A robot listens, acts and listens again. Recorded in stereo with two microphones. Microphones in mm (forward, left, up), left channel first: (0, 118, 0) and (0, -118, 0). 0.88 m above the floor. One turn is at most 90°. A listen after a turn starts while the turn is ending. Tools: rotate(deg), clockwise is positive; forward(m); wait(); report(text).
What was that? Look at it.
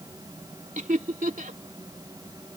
rotate(35)
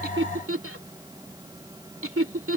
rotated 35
rotate(90)
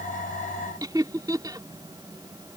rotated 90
rotate(15)
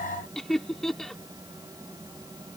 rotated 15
report("Found it: laughter, straight ahead.")